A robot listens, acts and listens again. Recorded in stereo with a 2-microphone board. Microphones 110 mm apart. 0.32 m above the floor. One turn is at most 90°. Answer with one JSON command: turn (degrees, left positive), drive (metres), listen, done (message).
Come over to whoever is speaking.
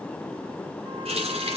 {"listen": true}
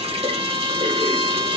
{"listen": true}
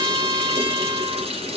{"done": "I can't make out anyone speaking, only a trumpet and a running tap."}